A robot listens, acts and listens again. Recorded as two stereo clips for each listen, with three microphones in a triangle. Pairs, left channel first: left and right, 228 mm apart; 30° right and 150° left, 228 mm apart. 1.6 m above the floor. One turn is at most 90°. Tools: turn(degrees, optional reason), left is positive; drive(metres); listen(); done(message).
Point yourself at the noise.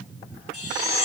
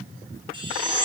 turn(degrees=80, reason="The chime: 80° left.")
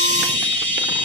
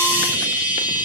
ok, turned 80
turn(degrees=25, reason="The chime is now 25° left.")
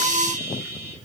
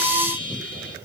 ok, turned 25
turn(degrees=-10, reason="The chime is now 10° right.")
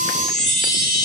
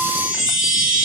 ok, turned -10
done("Found it: a chime, straight ahead.")